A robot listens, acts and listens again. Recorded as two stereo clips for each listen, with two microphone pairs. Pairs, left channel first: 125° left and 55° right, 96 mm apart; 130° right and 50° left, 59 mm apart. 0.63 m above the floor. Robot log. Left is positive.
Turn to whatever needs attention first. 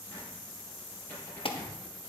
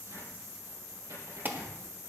note: The alarm: 110° left.
cmd yaw +110
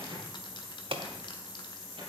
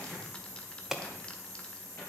note: The alarm is now 30° right.
cmd yaw -30
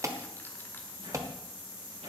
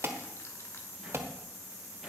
end: Facing the alarm, 1 to 2 m away.